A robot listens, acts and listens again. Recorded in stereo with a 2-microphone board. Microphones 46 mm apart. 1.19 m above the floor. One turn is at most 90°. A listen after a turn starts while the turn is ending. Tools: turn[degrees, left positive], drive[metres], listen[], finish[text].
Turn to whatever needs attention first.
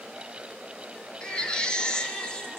Thought: The baby crying: about 20° left or 160° left.
Action: turn[20]
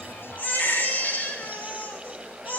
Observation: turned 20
Thought: So it is at 140° left.
Action: turn[90]
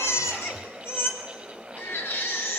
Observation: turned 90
Thought: The baby crying is now 55° left.
Action: turn[55]
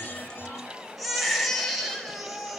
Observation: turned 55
Action: finish[Facing the baby crying, 2 to 4 m away.]